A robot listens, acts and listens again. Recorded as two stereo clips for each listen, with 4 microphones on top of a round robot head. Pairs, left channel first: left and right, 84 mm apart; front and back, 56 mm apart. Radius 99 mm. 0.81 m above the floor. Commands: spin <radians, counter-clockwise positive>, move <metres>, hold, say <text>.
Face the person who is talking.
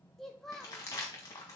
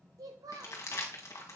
spin 3.05
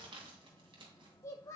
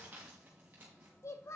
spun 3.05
spin 0.52
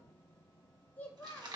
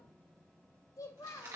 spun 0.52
spin 0.26
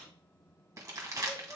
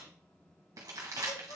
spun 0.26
hold
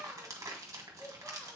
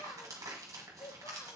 say Facing the child speaking.